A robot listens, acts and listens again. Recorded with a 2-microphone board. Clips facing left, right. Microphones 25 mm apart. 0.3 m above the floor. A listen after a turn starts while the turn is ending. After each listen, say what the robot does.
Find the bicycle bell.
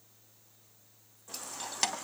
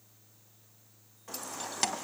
Keep listening.
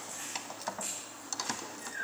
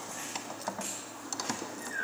Keep listening.
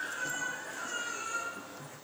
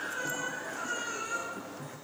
I can't make out a bicycle bell, only a baby crying and keys jangling.